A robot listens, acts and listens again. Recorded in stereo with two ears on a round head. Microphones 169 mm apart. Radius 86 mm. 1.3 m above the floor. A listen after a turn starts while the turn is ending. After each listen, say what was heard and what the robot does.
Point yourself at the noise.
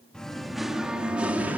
Turn 30° right.
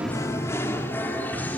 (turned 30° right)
So it is at 10° left. Turn 10° left.
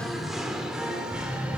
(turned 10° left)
Facing the singing.